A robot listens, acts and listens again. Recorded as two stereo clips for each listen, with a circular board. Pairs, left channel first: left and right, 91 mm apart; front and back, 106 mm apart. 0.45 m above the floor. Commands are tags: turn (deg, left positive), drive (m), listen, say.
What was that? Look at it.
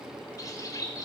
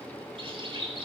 <turn deg="140"/>
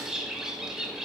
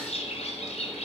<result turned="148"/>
<say>Facing the bird.</say>